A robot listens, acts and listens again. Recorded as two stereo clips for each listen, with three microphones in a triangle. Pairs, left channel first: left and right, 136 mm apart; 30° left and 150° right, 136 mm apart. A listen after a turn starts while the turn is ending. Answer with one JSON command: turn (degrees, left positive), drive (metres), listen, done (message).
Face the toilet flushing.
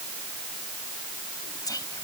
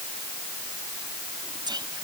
{"listen": true}
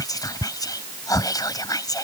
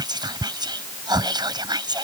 {"listen": true}
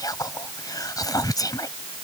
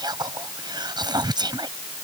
{"done": "I can't make out a toilet flushing, only whispering."}